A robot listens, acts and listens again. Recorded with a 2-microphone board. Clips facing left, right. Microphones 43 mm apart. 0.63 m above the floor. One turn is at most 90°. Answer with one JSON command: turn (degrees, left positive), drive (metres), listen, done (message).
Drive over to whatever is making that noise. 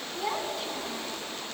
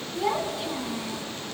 {"turn": -30}
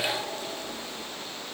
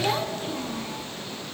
{"turn": -90}
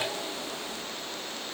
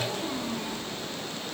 {"turn": -50}
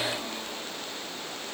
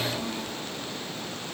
{"drive": 1.0}
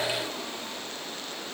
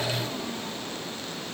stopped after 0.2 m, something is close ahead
{"listen": true}
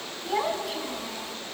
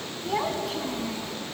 {"done": "Something is in my way. I am facing the child speaking but have not reached it."}